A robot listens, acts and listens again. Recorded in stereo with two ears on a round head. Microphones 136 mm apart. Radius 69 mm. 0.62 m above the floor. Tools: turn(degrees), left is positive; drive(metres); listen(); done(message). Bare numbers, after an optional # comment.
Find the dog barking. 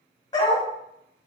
# The dog barking: about 30° left or 150° left.
turn(30)
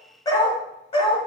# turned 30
# The dog barking: about 40° left or 140° left.
turn(40)
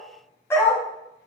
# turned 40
# So it is at 20° left.
turn(20)
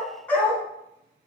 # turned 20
# The dog barking is now 15° left.
turn(15)
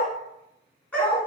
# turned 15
# The dog barking is now 10° left.
turn(10)
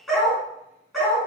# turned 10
done("Facing the dog barking.")